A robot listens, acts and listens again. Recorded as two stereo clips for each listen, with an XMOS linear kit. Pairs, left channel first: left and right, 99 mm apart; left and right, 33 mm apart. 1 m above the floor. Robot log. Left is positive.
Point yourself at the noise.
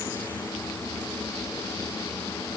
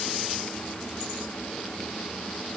cmd idle
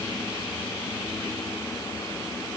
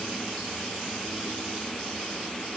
cmd idle
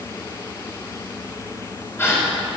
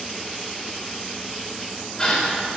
note: The gasp: about 25° left or 155° left.
cmd yaw +25
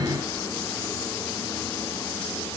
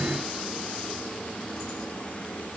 cmd idle
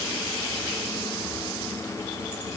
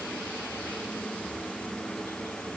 end: I heard a gasp, but can't make it out now. It was about straight ahead or 130° left.